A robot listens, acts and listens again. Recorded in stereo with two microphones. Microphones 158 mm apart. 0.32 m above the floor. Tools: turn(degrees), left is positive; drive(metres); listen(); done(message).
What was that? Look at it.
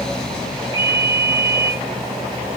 turn(degrees=20)
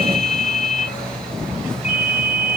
turn(degrees=140)
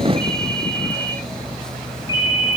turn(degrees=25)
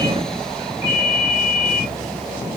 turn(degrees=-15)
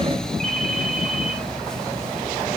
listen()
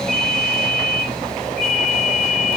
done("Found it: a ringtone, straight ahead, over 4 m away.")